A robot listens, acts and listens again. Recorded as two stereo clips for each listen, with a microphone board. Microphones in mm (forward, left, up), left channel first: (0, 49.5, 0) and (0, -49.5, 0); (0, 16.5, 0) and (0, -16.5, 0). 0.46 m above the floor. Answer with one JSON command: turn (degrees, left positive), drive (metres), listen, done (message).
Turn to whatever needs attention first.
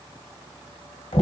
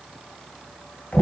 {"listen": true}
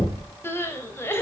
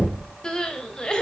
{"turn": 25}
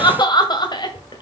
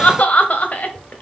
{"turn": 130}
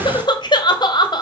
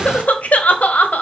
{"turn": 50}
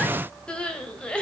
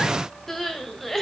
{"turn": 10}
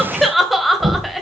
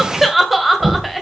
{"done": "Facing the crying, 1 to 2 m away."}